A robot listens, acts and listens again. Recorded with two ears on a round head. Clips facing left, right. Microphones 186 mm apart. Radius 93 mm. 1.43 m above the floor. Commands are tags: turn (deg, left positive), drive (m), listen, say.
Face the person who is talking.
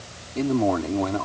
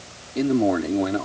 <turn deg="-20"/>
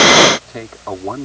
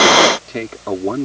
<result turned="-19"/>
<turn deg="-145"/>
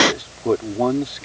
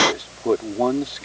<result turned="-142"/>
<say>Facing the man speaking.</say>